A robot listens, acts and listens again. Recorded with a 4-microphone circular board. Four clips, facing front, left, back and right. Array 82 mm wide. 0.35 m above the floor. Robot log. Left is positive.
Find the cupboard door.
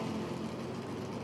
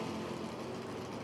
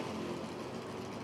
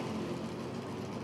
cmd idle
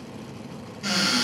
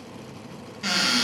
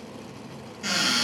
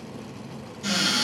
note: The cupboard door: 100° left.
cmd yaw +100
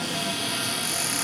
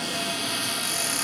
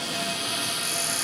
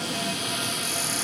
note: The cupboard door is now 50° left.
cmd yaw +50
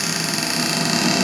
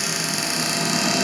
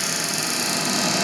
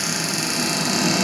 end: Found it: a cupboard door, straight ahead, under 1 m away.